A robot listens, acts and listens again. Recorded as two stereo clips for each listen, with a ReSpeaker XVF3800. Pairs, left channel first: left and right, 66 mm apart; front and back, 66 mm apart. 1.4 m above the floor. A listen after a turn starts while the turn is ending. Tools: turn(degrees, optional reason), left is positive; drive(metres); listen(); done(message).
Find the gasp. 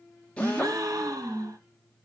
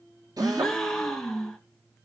turn(degrees=-85, reason="The gasp: 85° right.")
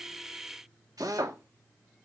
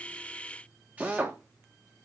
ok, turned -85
done("I heard a gasp from this way, but can't make it out now.")